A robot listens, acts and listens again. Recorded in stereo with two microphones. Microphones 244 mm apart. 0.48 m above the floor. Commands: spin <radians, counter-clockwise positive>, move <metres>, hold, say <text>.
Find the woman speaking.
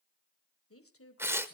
spin 1.13
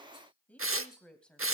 say Facing the woman speaking, 2 to 4 m away.